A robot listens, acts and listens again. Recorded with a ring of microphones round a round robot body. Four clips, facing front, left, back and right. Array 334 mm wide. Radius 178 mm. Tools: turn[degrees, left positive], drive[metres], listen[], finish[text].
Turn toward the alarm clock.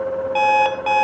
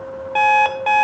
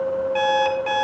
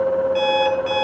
Thought: The alarm clock: 50° left.
Action: turn[50]
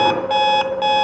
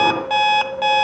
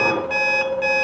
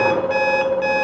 Thought: The alarm clock is now 30° left.
Action: turn[30]
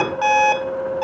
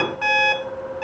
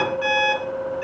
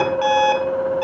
Thought: The alarm clock is now 20° right.
Action: turn[-20]
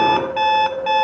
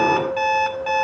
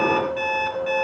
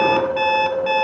Thought: The alarm clock is now 10° right.
Action: turn[-10]
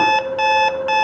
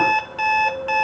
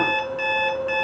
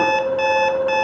Action: finish[Facing the alarm clock.]